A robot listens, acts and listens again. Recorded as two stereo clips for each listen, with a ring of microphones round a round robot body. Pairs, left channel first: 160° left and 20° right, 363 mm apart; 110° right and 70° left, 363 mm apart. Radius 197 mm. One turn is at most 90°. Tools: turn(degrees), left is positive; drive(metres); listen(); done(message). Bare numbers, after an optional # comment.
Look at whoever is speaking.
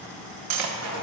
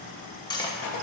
listen()
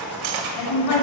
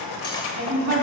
# The woman speaking: 140° left.
turn(90)
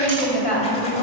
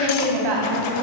# The woman speaking is now 90° left.
turn(90)
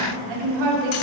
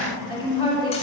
# The woman speaking is now 15° right.
turn(-15)
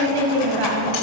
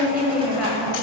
done("Found it: a woman speaking, straight ahead.")